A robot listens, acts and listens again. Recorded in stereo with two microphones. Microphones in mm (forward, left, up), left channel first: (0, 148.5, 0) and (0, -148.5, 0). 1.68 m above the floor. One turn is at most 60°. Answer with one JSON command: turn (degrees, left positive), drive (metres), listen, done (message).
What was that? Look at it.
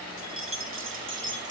{"turn": -40}
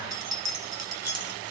{"turn": -60}
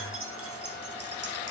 {"turn": -60}
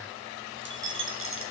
{"turn": -45}
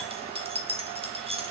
{"turn": -20}
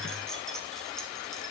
{"listen": true}
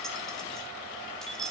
{"done": "Found it: keys jangling, straight ahead."}